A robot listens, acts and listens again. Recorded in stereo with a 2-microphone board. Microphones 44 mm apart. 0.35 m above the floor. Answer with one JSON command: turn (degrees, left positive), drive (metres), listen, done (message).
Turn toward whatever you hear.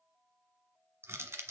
{"turn": -90}
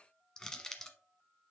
{"turn": 10}
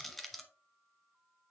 {"done": "Found it: crushing, straight ahead."}